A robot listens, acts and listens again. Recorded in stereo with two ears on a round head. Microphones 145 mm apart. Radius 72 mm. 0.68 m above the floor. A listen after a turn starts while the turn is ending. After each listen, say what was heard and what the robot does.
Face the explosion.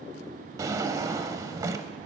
Keep listening.
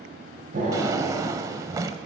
The explosion: about 55° right or 125° right. Turn 55° right.
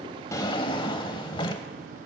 Keep listening.
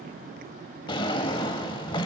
I heard an explosion, but can't make it out now. It was about straight ahead or 70° right.